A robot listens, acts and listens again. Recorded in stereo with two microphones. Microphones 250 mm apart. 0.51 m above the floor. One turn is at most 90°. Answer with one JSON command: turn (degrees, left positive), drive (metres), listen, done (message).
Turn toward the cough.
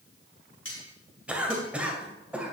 {"turn": -30}
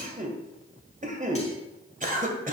{"turn": -90}
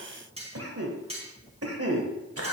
{"turn": -90}
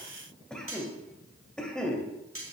{"done": "Found it: a cough, straight ahead, 2 to 4 m away."}